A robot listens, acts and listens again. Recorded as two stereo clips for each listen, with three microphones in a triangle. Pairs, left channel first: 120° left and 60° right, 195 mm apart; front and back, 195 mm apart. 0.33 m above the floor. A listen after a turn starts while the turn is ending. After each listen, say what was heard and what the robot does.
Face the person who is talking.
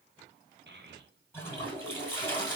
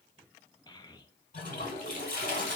The child speaking: 65° right. Turn 65° right.
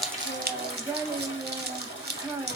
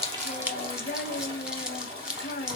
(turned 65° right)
The child speaking is now 10° left. Turn 10° left.
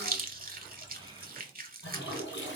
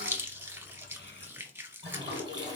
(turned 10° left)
Keep listening.
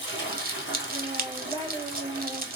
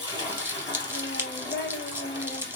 Found it: a child speaking, straight ahead, under 1 m away.